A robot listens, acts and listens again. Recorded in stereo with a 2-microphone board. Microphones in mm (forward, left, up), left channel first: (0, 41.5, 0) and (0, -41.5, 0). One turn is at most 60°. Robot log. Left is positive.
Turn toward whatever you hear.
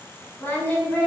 note: The singing: about 25° left or 155° left.
cmd yaw +25
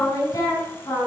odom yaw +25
note: So it is at 135° left.
cmd yaw +60
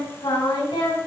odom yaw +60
note: The singing is now 95° left.
cmd yaw +60
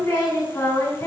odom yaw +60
note: The singing is now 35° left.
cmd yaw +35
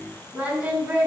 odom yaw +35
note: The singing is now 15° right.
cmd yaw -15
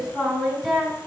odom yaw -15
end: Facing the singing.